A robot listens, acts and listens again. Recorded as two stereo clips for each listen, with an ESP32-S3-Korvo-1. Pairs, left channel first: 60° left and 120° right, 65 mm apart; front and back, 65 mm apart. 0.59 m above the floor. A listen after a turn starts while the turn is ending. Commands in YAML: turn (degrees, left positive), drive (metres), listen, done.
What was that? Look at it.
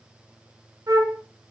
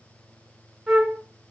turn: -90
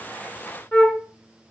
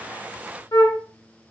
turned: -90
done: "Facing the flute, 1 to 2 m away."